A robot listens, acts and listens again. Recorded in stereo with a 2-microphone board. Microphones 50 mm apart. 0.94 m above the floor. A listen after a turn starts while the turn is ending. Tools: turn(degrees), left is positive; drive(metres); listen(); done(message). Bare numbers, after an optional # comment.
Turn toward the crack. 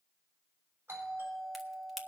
turn(30)
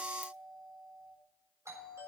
listen()
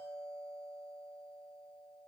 done("I heard a crack, but can't make it out now. It was about 30° right or 150° left.")